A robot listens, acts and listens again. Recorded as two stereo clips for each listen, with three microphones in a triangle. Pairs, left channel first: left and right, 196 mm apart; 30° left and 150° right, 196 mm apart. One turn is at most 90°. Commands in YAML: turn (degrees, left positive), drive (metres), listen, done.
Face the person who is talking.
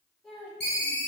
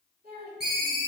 turn: 90
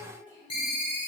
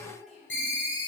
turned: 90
turn: 85
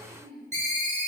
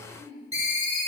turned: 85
turn: 10
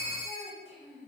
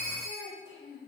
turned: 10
done: "Facing the child speaking."